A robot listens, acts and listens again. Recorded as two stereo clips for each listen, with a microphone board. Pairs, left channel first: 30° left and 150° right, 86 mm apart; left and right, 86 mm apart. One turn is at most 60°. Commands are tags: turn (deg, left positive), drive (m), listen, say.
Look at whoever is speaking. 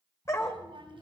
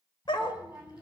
<turn deg="-60"/>
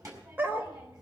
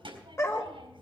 <turn deg="-60"/>
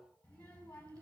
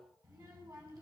<turn deg="-40"/>
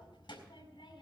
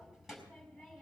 <say>Found it: a child speaking, straight ahead, over 4 m away.</say>